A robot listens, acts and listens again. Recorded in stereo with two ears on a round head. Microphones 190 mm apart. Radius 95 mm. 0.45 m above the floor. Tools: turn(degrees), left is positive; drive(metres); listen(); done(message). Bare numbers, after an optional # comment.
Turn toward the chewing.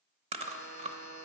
# The chewing: about 30° right or 150° right.
turn(-30)
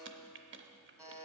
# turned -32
listen()
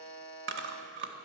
# So it is at 120° right.
turn(-120)
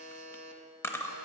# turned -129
# The chewing is now 10° left.
turn(10)
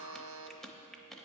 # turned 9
done("Facing the chewing.")